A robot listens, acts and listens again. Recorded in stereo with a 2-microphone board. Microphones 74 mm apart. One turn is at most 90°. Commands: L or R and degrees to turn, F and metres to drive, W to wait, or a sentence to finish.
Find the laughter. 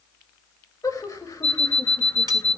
L45
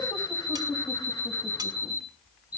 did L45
L90
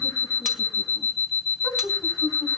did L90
L50
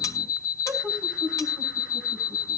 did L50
R10
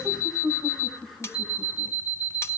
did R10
Facing the laughter.